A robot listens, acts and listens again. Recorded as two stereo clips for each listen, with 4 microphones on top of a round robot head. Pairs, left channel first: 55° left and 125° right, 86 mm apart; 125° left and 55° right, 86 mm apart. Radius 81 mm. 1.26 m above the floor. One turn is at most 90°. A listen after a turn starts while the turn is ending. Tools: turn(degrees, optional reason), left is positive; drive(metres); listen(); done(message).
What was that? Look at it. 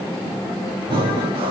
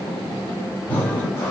turn(degrees=-90, reason="The breathing: 160° right.")
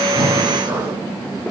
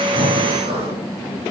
turn(degrees=-65, reason="The breathing is now 65° right.")
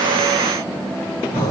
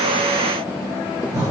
done("Facing the breathing.")